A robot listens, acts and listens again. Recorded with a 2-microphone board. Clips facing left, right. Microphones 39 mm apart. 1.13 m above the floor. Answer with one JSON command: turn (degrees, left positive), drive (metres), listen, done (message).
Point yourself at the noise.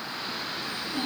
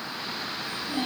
{"turn": -75}
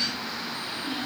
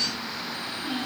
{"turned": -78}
{"turn": -35}
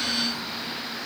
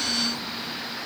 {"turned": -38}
{"done": "Found it: a child speaking, straight ahead."}